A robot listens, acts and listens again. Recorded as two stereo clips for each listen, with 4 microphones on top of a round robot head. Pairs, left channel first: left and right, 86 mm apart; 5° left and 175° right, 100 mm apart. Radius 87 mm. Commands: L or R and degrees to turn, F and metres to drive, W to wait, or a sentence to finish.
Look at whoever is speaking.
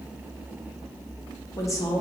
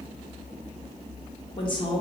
L35
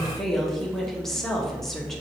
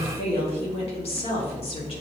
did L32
Found it: a woman speaking, straight ahead, 1 to 2 m away.